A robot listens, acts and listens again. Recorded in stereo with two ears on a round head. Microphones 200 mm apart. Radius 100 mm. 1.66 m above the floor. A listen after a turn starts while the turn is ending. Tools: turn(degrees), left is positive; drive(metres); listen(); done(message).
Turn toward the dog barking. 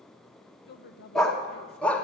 turn(degrees=30)
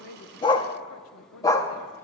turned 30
turn(degrees=30)
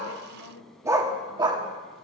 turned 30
turn(degrees=-20)
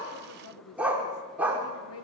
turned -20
done("Facing the dog barking.")